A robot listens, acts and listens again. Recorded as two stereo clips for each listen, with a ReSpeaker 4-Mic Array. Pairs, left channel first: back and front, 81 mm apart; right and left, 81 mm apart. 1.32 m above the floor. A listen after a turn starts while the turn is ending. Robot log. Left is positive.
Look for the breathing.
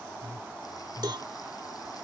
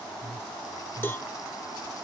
note: The breathing: 175° right.
cmd yaw -175
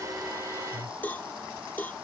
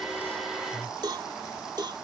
note: The breathing is now 30° right.
cmd yaw -30
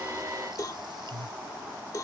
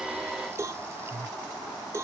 end: Facing the breathing.